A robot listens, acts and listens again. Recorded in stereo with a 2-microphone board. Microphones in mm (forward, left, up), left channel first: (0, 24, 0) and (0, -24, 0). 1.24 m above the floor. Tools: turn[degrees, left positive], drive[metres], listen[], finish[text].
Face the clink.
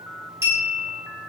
Thought: The clink: about 70° right or 110° right.
Action: turn[-70]
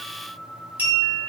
Thought: So it is at 40° right.
Action: turn[-40]
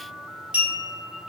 Thought: The clink is now 25° right.
Action: turn[-25]
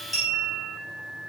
Action: finish[Found it: a clink, straight ahead.]